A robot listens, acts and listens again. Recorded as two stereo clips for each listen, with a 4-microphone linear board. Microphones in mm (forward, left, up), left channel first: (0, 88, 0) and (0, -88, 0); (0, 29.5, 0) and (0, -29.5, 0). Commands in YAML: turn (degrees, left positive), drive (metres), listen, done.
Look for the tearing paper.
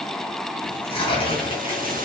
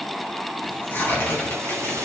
turn: 30
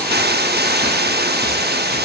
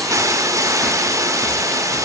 listen: true
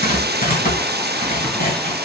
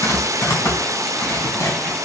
turn: 120
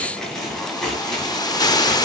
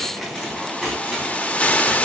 done: "Found it: tearing paper, straight ahead."